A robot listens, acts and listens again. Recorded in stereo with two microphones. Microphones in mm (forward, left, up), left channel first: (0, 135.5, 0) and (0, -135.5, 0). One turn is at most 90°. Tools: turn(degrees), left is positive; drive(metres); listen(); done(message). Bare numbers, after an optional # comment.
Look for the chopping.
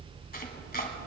# The chopping: about 35° left or 145° left.
turn(35)
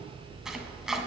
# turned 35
done("Facing the chopping, 1 to 2 m away.")